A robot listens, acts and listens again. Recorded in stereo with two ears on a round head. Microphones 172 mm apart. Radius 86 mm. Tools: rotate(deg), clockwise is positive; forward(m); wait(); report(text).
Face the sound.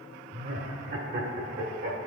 rotate(60)
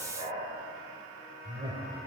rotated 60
rotate(40)
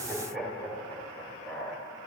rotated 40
report("Found it: laughter, straight ahead.")